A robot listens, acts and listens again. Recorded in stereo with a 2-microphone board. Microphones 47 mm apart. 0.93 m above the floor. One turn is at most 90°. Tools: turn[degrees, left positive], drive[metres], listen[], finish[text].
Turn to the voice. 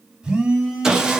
Action: listen[]
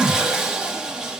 Action: listen[]
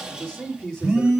Thought: The man speaking: about 15° left or 165° left.
Action: turn[15]
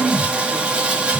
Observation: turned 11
Action: listen[]
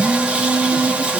Action: listen[]
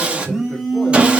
Action: finish[I heard a man speaking, but can't make it out now. It was about 5° left or 155° left.]